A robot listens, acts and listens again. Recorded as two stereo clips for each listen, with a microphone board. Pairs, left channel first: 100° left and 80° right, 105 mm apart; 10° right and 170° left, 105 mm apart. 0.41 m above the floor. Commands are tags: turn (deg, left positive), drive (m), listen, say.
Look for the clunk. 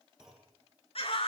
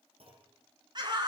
<turn deg="-165"/>
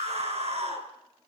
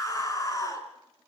<say>Facing where the clunk came from. I can't hear it now.</say>